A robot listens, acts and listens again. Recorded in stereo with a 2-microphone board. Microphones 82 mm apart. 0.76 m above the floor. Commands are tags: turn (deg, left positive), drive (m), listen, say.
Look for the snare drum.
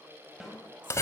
<turn deg="30"/>
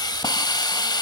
<listen/>
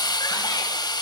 <listen/>
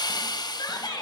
<say>I heard a snare drum, but can't make it out now. It was about 30° right or 150° left.</say>